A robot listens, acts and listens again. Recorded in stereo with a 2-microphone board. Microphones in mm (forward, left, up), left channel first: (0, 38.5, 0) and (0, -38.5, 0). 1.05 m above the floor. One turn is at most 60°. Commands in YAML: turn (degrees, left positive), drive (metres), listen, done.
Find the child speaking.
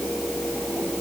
listen: true
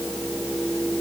listen: true
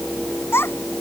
turn: 30
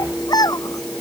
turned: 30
turn: 60
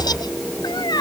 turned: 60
turn: 60
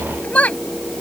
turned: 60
turn: 20
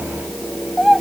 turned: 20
done: "Facing the child speaking."